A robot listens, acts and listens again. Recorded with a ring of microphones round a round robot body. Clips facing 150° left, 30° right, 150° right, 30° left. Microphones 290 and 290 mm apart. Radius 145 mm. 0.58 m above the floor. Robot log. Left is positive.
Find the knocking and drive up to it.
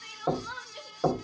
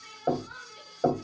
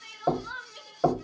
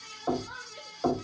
note: The knocking: 140° right.
cmd yaw -140
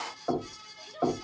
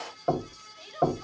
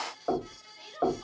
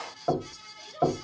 cmd fwd 1.0
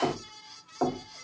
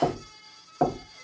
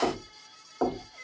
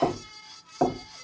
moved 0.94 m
cmd fwd 1.0
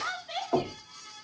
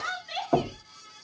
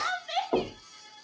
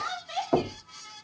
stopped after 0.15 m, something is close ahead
note: The knocking is now 10° right.
cmd yaw -10
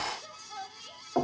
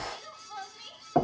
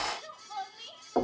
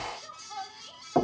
end: Arrived at the knocking, straight ahead.